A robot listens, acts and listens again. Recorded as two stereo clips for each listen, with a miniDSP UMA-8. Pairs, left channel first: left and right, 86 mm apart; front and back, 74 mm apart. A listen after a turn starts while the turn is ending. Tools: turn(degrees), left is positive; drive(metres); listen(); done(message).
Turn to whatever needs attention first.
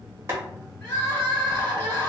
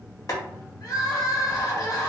turn(degrees=30)
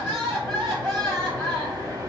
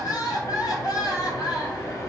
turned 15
turn(degrees=15)
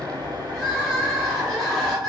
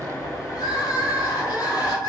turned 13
done("Facing the crying.")